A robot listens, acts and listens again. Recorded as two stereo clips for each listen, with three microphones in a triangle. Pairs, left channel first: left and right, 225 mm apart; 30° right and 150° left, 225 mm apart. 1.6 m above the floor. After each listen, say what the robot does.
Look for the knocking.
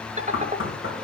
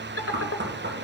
Turn 115° left.
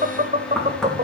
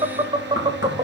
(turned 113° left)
Found it: knocking, straight ahead.